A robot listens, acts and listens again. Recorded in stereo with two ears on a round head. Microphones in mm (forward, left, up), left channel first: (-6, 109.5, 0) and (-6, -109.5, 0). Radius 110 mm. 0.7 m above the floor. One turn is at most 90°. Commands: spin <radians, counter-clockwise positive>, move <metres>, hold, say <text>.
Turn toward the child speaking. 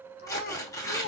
spin 0.52
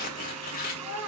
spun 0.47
spin -0.17
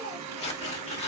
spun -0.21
hold
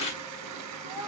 spin -0.26
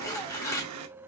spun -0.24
hold
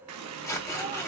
hold
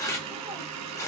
say I heard a child speaking from this way, but can't make it out now.